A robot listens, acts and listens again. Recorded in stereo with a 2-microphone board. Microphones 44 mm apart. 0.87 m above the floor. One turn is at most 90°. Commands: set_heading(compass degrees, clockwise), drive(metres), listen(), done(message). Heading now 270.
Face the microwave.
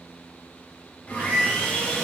set_heading(330)
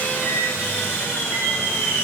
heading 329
listen()
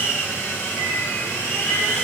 listen()
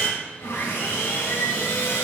done("I heard a microwave, but can't make it out now. It was about straight ahead or 60° right.")